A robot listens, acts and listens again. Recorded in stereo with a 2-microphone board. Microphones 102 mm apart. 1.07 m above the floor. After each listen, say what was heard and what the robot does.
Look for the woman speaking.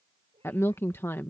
The woman speaking: about 25° left or 155° left. Turn 25° left.
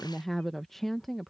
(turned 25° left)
Found it: a woman speaking, straight ahead.